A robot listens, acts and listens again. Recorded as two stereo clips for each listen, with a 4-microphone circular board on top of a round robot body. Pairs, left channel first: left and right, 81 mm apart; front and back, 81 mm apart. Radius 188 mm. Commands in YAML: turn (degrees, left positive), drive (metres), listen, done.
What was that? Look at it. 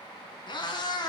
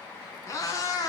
turn: 50
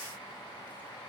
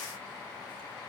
listen: true
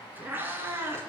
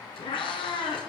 turn: -25
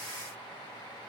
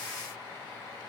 listen: true
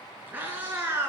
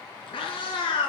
turn: -20
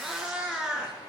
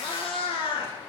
done: "Facing the cat meowing, 2 to 4 m away."